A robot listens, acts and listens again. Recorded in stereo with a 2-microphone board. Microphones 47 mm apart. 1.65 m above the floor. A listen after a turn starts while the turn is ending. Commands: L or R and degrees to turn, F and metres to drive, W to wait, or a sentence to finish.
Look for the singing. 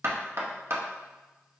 W
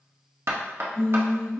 L70
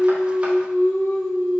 L60
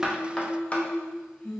L30
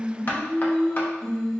L10
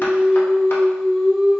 Found it: singing, straight ahead.